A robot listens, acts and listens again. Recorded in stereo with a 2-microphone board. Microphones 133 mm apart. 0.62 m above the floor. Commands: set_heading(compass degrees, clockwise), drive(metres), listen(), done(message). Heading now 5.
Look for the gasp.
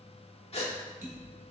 set_heading(315)
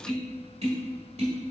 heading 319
listen()
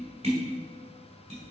done("I heard a gasp, but can't make it out now. It was about 5° left or 85° left.")